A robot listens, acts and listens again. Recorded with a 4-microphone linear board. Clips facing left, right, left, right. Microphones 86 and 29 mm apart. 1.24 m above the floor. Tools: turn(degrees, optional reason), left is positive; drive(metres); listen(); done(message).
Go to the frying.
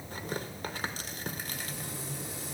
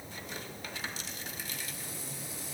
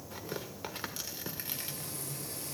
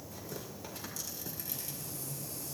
turn(degrees=90)
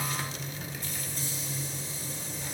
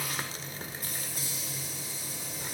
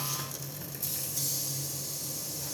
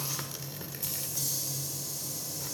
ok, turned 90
drive(metres=1.0)
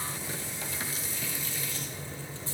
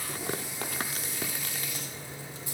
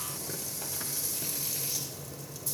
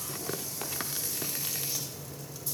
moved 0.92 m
turn(degrees=-15, reason="The frying is now 15° right.")
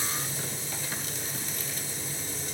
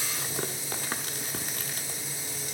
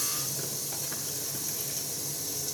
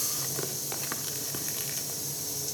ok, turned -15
drive(metres=1.0)
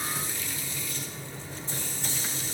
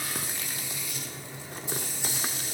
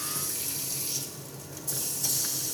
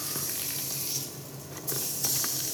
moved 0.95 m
turn(degrees=-10, reason="The frying is now 10° right.")
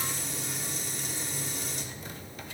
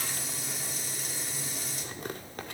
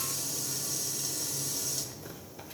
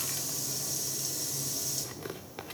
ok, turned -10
drive(metres=1.0)
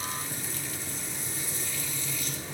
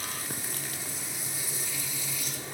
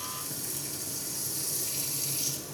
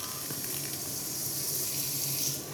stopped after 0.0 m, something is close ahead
turn(degrees=-10, reason="The frying is now 10° right.")
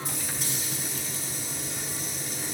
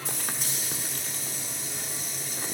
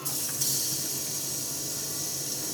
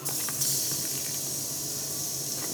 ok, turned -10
done("Something is in my way. I am facing the frying but have not reached it.")